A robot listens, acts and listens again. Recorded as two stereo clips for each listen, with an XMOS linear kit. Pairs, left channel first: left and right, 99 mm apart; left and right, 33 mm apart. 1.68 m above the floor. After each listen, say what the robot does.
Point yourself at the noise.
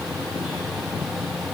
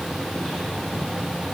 Keep listening.
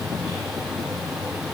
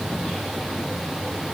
Keep listening.
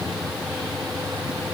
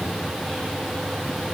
I can't make out anything.